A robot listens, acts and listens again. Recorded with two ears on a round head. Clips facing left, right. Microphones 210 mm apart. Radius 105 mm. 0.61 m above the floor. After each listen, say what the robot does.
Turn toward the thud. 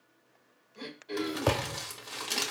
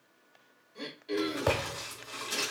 Turn 25° left.
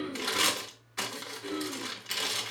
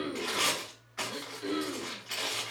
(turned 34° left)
Keep listening.
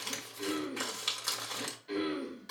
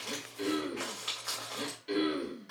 I heard a thud, but can't make it out now. It was about 10° right or 120° left.